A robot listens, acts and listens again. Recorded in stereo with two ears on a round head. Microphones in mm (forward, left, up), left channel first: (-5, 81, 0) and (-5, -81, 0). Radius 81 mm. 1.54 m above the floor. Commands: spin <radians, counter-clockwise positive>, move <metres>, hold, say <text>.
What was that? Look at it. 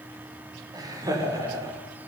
spin -0.35
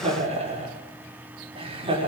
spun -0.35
spin -0.52
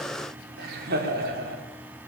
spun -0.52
spin -2.18
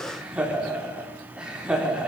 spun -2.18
say Facing the laughter.